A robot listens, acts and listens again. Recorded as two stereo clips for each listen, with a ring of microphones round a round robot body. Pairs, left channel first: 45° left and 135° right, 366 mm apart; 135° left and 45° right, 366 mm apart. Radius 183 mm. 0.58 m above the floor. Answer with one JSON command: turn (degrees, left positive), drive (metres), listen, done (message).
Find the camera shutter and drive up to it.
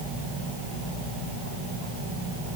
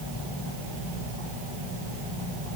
{"listen": true}
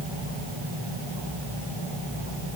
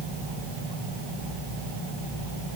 {"listen": true}
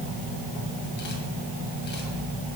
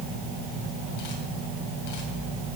{"done": "I can't make out a camera shutter."}